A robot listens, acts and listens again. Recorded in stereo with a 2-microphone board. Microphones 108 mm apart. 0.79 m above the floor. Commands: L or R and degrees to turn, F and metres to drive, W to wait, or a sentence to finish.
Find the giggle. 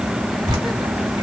W
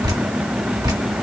W
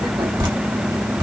I can't make out a giggle to turn to.